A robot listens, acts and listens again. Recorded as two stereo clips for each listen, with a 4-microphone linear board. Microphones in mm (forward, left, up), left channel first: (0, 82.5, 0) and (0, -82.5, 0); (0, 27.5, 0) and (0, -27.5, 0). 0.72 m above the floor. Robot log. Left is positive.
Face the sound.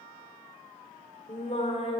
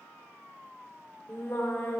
note: The singing: about 40° left or 140° left.
cmd yaw +40
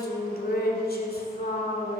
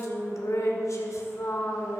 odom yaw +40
note: So it is at 105° left.
cmd yaw +105
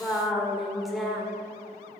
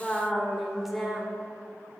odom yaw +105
end: Facing the singing, 1 to 2 m away.